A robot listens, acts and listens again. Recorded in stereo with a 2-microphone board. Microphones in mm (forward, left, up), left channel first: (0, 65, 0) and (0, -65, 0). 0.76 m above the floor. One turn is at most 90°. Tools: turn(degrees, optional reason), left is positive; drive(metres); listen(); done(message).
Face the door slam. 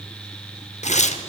listen()
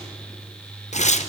listen()
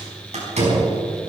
turn(degrees=-65, reason="The door slam: about 65° right or 115° right.")
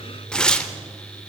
listen()
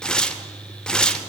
done("I heard a door slam, but can't make it out now. It was about straight ahead or 50° right.")